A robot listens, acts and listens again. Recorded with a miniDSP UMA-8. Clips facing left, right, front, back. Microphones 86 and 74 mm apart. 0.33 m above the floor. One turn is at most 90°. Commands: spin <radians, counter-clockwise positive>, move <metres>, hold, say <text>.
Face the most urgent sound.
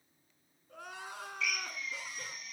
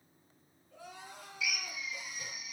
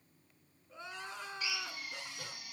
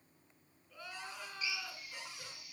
spin 1.13
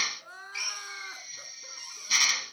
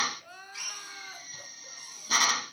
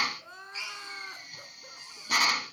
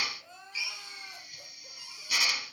spin 0.61
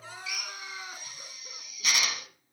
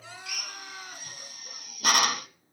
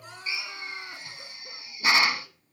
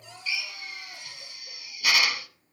spin 0.26
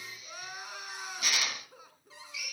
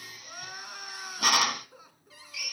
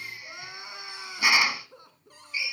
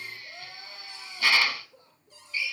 say Found it: crying, straight ahead, 2 to 4 m away.